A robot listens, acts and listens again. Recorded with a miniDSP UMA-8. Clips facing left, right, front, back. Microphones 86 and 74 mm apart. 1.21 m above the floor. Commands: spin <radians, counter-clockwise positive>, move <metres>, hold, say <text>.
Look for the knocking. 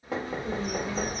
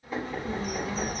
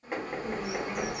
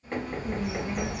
spin 1.40
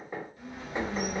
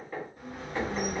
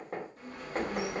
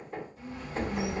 spin 0.35
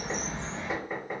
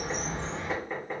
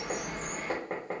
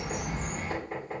say Facing the knocking.